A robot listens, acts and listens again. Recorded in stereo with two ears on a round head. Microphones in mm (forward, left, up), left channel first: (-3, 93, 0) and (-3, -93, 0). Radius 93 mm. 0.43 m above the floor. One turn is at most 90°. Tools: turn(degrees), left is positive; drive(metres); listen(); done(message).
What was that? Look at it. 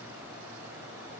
listen()
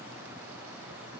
listen()
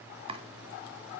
turn(degrees=-30)
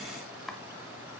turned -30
done("Found it: chopping, straight ahead, 1 to 2 m away.")